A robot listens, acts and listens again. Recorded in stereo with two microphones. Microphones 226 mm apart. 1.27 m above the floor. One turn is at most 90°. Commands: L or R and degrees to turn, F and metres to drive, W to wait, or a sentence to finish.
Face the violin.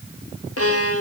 L90
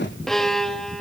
Found it: a violin, straight ahead.